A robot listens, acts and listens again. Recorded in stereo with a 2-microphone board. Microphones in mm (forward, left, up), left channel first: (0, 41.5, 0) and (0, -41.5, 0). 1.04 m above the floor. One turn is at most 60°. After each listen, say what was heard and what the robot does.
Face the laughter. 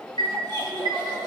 The laughter: about 55° right or 125° right. Turn 55° right.
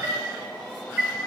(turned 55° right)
Keep listening.
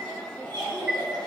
So it is at 65° right. Turn 60° right.
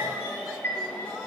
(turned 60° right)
Keep listening.
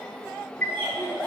The laughter is now 20° right. Turn 20° right.
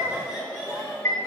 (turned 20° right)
The laughter is now 10° right. Turn 10° right.
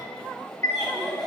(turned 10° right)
Facing the laughter.